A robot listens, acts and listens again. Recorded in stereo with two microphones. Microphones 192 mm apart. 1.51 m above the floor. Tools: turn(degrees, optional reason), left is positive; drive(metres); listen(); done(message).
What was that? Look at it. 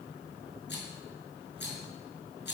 turn(degrees=65, reason="The rattle: about 65° left or 115° left.")
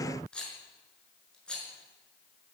done("Facing the rattle, over 4 m away.")